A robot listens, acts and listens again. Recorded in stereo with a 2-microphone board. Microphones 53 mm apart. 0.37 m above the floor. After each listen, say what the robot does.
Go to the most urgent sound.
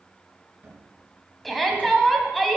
Turn 30° left.
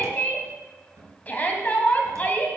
Turn 145° left.
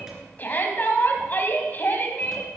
Turn 40° left.
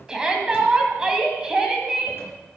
Turn 15° right.
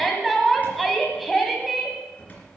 Drive 1.0 m forward.
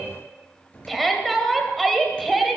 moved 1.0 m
Drive 1.0 m forward.
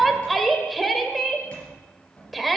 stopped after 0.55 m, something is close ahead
I am next to the shout.